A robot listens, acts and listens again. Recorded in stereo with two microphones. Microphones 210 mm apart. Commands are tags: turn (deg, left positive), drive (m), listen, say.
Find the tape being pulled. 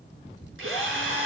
<listen/>
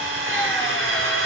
<listen/>
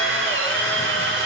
<say>I can't make out tape being pulled, only a drill.</say>